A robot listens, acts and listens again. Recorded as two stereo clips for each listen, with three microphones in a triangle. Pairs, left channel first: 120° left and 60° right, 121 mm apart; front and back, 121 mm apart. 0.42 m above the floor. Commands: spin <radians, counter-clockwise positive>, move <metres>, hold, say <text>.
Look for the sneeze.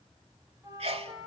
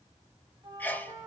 spin -1.31
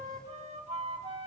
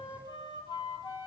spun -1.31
say Facing where the sneeze came from. I can't hear it now.